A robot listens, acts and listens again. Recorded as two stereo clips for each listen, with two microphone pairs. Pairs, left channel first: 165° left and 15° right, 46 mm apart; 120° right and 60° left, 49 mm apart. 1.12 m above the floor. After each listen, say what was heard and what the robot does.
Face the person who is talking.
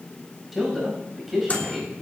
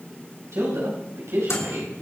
The man speaking: 70° left. Turn 70° left.
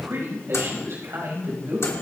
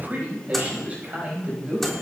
Facing the man speaking, over 4 m away.